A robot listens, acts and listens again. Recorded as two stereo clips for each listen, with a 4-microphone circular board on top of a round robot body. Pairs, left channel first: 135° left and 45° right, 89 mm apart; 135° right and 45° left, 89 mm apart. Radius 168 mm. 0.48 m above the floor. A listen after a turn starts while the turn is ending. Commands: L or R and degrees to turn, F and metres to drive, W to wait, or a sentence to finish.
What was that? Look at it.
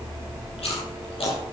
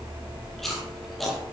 L135
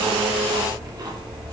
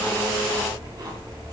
W
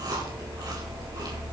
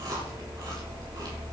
Found it: chewing, straight ahead.